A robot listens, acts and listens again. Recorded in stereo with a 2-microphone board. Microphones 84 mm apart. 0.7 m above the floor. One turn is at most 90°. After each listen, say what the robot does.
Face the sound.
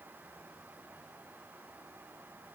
Keep listening.
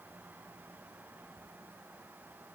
Keep listening.
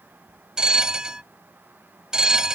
Turn 30° right.
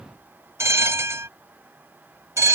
Turn 90° right.
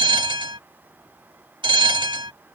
Turn 70° right.
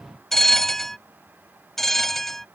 Facing the bell.